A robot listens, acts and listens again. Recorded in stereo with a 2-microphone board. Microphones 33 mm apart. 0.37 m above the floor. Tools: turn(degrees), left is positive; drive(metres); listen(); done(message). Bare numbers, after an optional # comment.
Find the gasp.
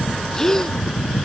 turn(30)
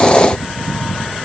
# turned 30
listen()
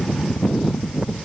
done("I heard a gasp, but can't make it out now. It was about 20° right or 140° left.")